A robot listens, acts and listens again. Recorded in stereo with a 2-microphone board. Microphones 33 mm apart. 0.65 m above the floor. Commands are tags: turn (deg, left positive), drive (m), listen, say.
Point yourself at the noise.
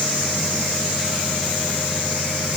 <listen/>
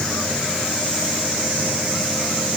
<listen/>
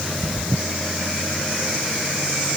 <say>I can't make out anything to turn to.</say>